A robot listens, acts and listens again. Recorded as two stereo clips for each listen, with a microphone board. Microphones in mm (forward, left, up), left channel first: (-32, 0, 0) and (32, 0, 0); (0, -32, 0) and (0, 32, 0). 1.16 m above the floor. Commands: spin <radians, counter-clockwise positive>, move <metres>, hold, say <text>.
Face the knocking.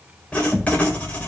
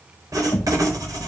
spin -1.66
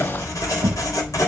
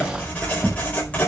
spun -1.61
say Found it: knocking, straight ahead.